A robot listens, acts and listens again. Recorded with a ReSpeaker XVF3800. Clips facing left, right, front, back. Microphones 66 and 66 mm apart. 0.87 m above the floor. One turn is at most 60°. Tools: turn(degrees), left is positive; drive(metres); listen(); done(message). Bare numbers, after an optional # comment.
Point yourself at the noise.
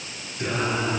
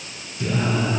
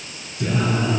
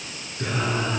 # The singing: 135° left.
turn(60)
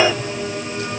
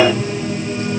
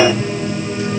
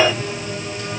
# The singing is now 80° left.
turn(60)
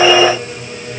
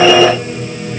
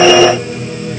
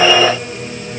done("Facing the singing, over 4 m away.")